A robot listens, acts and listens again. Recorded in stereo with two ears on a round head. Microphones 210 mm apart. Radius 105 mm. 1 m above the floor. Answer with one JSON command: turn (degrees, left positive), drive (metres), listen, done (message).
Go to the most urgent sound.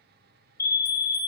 {"turn": 30}
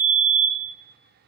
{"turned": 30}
{"turn": 135}
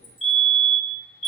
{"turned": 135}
{"turn": 35}
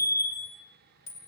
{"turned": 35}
{"turn": 15}
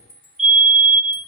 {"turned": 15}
{"drive": 1.0}
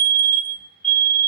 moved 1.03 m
{"drive": 1.0}
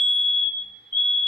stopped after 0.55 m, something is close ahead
{"turn": 15}
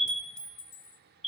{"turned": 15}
{"done": "I am next to the fire alarm."}